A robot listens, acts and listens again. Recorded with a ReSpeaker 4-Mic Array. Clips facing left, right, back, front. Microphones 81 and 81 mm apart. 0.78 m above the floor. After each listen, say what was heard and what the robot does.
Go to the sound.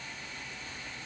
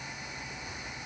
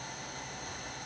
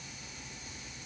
Keep listening.
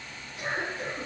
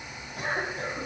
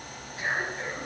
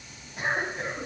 The cough: 75° right. Turn 75° right.
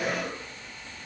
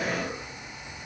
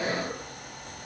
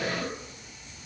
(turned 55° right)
Nothing new. It was at 20° right. Turn 20° right.
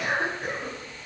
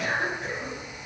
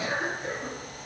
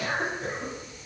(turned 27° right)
Drive 1.0 m forward.
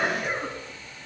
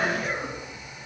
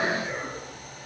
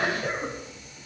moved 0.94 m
Drive 1.0 m forward.
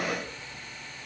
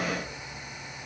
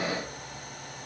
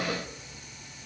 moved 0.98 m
Keep listening.
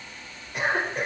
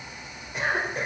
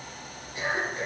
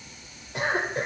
Drive 1.0 m forward.
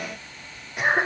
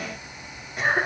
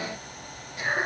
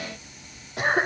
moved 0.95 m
Drive 1.0 m forward.
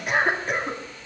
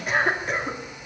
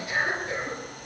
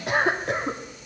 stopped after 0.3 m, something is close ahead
I am next to the cough.